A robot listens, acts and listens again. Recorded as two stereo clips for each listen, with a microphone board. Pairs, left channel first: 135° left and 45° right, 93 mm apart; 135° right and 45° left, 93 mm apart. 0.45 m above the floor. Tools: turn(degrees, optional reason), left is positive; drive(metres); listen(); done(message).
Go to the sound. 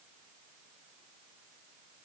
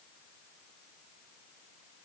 listen()
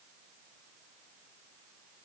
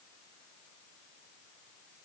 listen()
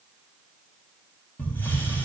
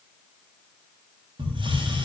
turn(degrees=65, reason="The hiss: 65° left.")
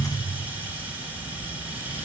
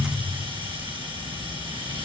turn(degrees=25, reason="The hiss is now 25° left.")
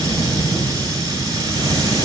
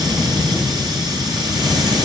drive(metres=1.0)
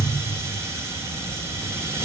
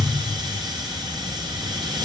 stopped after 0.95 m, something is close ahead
turn(degrees=15, reason="The hiss is now 15° left.")
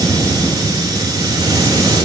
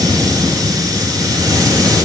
done("Something is in my way. I am facing the hiss but have not reached it.")